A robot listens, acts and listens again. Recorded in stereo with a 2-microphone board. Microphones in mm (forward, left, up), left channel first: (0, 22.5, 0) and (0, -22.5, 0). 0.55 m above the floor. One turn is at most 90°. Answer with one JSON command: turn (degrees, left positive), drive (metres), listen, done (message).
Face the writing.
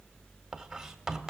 {"turn": -30}
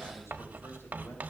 {"turn": -90}
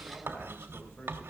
{"turn": -90}
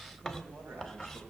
{"done": "Facing the writing."}